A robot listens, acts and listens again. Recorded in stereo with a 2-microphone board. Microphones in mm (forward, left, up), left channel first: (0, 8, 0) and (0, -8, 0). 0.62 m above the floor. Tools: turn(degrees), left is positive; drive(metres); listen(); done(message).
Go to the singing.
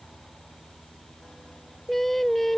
turn(degrees=30)
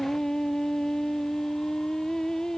turn(degrees=140)
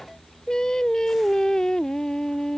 turn(degrees=55)
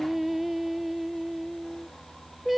turn(degrees=-10)
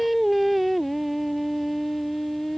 drive(metres=1.0)
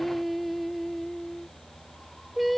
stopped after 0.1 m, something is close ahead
done("Something is in my way. I am facing the singing but have not reached it.")